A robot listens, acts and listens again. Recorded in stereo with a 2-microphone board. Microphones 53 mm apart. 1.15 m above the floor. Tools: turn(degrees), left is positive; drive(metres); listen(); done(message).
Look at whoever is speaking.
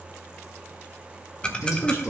turn(degrees=45)
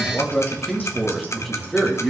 done("Found it: a man speaking, straight ahead.")